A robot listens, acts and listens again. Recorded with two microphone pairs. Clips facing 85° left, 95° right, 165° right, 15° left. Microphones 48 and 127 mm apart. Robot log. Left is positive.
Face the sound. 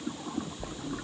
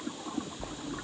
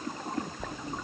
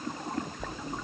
note: The bell: 100° right.
cmd yaw -100
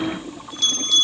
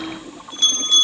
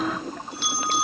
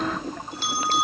note: The bell is now 40° right.
cmd yaw -40
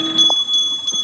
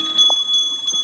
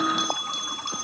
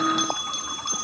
note: The bell is now 10° right.
cmd yaw -10
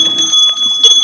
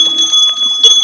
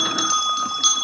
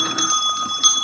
end: Found it: a bell, straight ahead.